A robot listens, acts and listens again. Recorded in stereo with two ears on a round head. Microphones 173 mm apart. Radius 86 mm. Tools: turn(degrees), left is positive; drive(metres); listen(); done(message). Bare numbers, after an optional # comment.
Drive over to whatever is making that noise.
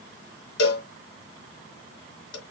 # The cowbell: about 70° left or 110° left.
turn(70)
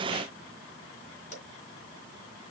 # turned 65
listen()
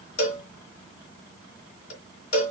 # So it is at 45° left.
turn(45)
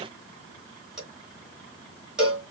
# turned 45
drive(1.0)
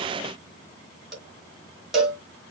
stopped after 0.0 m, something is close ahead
done("Blocked. The cowbell is further on, straight ahead.")